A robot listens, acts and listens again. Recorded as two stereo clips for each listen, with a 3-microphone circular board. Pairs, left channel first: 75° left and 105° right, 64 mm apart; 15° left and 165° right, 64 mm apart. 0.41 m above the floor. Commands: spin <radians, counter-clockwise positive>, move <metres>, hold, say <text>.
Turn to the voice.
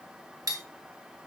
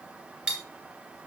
hold
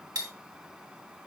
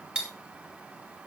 hold
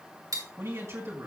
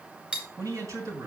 spin -2.53
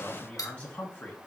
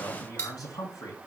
say Found it: a man speaking, straight ahead, 2 to 4 m away.